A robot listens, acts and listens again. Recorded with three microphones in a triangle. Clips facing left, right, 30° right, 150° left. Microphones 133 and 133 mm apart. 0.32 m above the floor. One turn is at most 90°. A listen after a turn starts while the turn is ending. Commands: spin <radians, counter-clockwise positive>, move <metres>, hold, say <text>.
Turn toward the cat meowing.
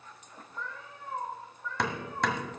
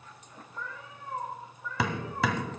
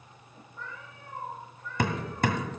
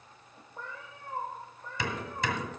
spin -1.57
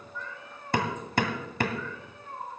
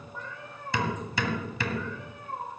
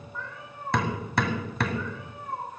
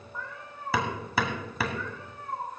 spin -1.57
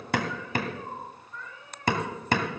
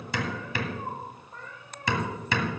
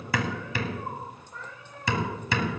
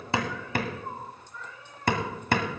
spin -0.79
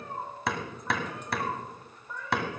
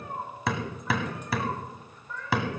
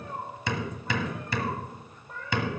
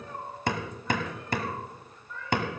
spin 0.26
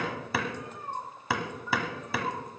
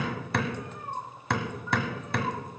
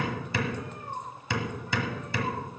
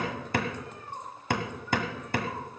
say Facing the cat meowing, over 4 m away.